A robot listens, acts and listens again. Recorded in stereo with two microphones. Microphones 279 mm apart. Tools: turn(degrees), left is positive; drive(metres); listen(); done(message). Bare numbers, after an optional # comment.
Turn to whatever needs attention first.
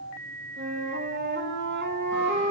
listen()
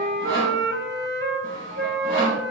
listen()
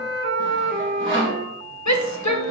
turn(90)
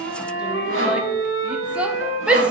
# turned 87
done("Found it: a shout, straight ahead, under 1 m away.")